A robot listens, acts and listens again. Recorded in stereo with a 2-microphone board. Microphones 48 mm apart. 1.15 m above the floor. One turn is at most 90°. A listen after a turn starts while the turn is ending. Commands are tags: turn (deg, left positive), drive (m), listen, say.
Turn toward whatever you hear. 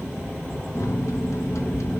<turn deg="75"/>
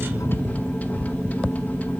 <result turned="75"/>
<turn deg="30"/>
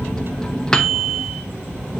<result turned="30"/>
<turn deg="15"/>
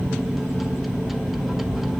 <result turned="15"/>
<say>Facing the microwave.</say>